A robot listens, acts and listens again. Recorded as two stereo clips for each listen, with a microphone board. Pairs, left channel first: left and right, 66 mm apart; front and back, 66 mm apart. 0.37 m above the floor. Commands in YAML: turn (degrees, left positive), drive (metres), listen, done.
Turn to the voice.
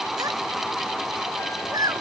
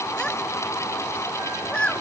turn: -75
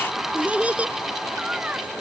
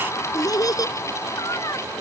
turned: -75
turn: -20
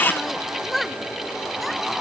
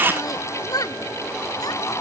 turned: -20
done: "Found it: a child speaking, straight ahead."